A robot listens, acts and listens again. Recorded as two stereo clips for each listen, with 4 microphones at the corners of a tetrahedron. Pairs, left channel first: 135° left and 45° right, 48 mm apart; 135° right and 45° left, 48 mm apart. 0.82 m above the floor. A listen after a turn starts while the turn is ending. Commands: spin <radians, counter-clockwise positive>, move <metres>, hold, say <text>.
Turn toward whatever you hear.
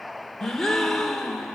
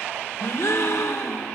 spin -2.53
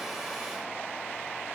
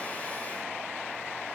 say I heard a gasp from this way, but can't make it out now.